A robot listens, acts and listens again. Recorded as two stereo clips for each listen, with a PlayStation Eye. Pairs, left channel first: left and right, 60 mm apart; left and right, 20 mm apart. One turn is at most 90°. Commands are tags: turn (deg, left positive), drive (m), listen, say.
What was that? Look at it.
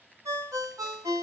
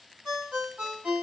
<turn deg="-70"/>
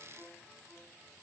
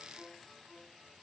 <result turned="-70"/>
<listen/>
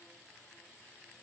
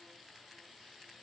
<listen/>
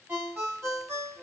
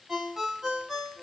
<turn deg="-40"/>
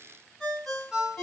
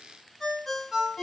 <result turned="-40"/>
<say>Found it: a ringtone, straight ahead.</say>